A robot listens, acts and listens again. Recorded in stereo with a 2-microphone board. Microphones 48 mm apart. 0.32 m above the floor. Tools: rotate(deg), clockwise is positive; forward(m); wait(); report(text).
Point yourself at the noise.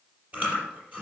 rotate(30)
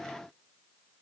wait()
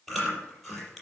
report("Facing the chewing, over 4 m away.")